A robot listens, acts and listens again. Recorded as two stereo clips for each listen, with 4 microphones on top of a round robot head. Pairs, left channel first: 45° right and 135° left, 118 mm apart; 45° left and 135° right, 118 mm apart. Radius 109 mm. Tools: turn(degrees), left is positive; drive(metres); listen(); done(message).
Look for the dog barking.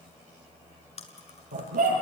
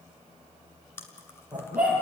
turn(degrees=145)
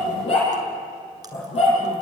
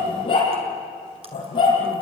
done("Facing the dog barking, over 4 m away.")